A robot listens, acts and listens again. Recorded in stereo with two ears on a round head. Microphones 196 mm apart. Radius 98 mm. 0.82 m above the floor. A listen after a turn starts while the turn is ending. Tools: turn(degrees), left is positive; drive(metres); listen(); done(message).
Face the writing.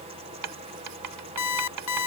turn(degrees=-90)
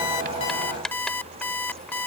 done("Facing the writing.")